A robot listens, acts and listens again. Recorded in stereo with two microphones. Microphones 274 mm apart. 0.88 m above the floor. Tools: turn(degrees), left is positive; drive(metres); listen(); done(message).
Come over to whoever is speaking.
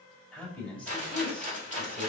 turn(degrees=30)
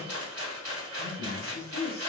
turn(degrees=145)
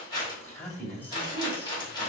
drive(metres=1.0)
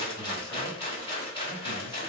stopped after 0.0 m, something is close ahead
listen()
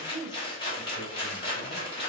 done("Something is in my way. I am facing the man speaking but have not reached it.")